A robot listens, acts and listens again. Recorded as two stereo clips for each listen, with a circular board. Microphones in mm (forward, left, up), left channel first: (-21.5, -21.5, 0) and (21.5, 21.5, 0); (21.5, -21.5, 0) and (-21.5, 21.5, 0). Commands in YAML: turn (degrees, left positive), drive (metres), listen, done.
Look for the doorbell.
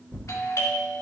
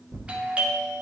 turn: -160
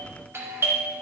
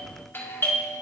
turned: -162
done: "Found it: a doorbell, straight ahead, 2 to 4 m away."